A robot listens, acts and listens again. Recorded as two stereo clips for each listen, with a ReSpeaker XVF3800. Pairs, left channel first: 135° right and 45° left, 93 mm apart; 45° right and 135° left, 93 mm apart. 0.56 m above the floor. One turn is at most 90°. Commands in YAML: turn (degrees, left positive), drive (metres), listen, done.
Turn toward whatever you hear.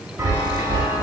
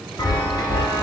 turn: -15
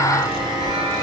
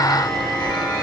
done: "Facing the chime."